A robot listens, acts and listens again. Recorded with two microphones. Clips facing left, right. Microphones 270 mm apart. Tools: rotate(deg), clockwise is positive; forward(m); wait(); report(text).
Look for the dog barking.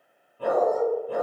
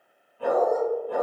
rotate(-35)
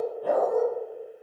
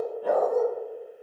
report("Found it: a dog barking, straight ahead, 1 to 2 m away.")